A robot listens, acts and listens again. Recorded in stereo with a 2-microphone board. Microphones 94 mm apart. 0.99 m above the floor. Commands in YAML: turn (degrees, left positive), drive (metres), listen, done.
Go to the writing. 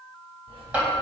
turn: -90
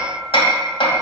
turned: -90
listen: true
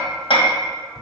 drive: 1.0
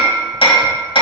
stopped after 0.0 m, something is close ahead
listen: true
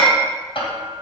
listen: true
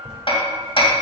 done: "Something is in my way. I am facing the writing but have not reached it."